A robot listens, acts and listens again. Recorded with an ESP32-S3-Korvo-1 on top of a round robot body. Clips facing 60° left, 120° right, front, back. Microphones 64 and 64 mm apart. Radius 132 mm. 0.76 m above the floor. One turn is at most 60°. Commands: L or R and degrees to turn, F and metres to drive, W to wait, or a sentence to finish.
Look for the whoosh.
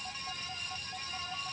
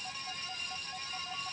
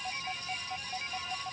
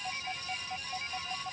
W
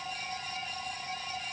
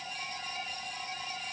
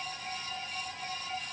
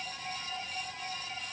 W
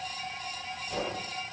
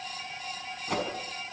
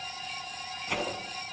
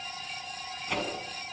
R60
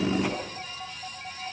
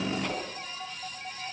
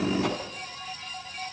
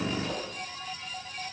R20
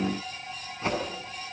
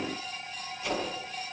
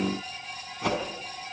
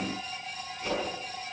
Facing the whoosh.